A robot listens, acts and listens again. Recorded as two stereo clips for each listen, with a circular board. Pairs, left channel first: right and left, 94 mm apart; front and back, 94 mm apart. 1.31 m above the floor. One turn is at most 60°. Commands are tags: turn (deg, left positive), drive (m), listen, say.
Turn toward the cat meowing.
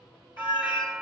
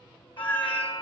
<turn deg="-60"/>
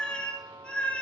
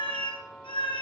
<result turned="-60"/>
<turn deg="-10"/>
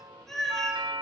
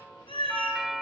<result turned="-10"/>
<say>Found it: a cat meowing, straight ahead.</say>